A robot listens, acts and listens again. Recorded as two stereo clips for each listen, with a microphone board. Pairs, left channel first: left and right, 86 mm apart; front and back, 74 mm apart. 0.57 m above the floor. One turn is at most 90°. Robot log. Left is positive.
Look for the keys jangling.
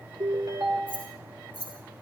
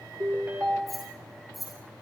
note: The keys jangling: 90° right.
cmd yaw -90
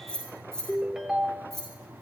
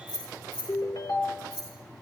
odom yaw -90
end: Facing the keys jangling.